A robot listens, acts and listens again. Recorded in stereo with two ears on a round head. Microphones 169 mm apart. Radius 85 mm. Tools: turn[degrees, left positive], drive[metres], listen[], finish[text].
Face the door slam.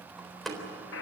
Action: turn[30]
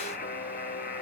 Action: listen[]
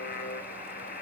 Action: finish[I heard a door slam, but can't make it out now. It was about 30° right or 150° left.]